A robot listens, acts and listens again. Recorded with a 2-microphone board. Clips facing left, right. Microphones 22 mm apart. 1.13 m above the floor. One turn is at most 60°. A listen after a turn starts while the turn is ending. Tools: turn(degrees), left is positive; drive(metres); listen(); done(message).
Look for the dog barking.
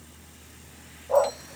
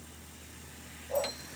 turn(degrees=60)
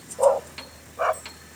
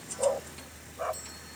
turn(degrees=45)
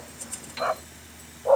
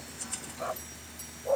turn(degrees=45)
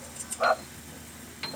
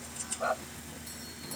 turn(degrees=35)
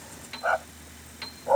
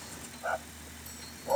turn(degrees=30)
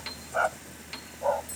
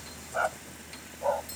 done("Facing the dog barking.")